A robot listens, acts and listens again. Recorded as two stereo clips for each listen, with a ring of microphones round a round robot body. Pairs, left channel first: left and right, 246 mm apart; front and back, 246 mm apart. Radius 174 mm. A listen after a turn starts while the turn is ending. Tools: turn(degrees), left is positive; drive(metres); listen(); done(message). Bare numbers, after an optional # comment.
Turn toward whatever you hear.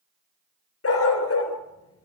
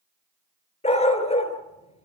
# The dog barking: 65° left.
turn(65)
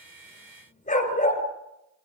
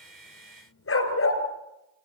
# The dog barking is now 30° left.
turn(30)
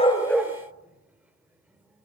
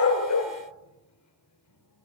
listen()
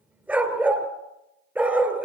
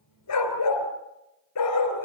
done("Facing the dog barking, 2 to 4 m away.")